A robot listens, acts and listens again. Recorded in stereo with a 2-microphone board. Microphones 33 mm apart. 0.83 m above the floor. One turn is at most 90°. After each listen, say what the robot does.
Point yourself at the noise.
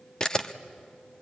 Turn 20° left.
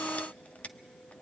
Keep listening.
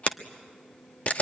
Turn 90° left.
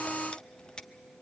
Turn 50° left.
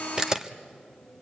Turn 15° right.
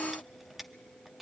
Keep listening.
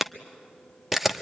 Found it: a camera shutter, straight ahead, under 1 m away.